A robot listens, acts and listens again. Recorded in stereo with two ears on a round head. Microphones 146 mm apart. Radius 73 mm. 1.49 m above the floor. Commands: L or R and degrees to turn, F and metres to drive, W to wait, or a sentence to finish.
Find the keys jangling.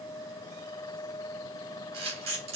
W
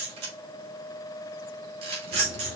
R35
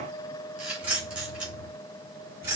R15
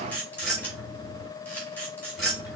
Found it: keys jangling, straight ahead, 2 to 4 m away.